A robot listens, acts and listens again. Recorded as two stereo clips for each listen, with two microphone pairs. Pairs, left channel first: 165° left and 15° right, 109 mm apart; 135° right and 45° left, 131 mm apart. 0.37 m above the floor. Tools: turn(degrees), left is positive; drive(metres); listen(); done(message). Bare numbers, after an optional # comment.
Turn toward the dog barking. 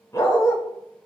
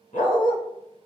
# The dog barking: 135° right.
turn(-135)
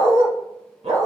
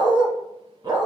# The dog barking is now 10° right.
turn(-10)
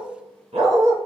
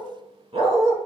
done("Facing the dog barking.")